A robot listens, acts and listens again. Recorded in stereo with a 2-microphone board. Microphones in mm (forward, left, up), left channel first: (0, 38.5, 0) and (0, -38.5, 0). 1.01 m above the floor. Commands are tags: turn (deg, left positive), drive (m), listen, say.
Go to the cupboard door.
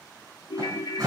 <turn deg="-55"/>
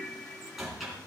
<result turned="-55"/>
<drive m="1.0"/>
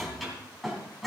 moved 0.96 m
<drive m="1.0"/>
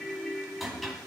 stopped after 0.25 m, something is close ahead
<say>Blocked. The cupboard door is further on, straight ahead.</say>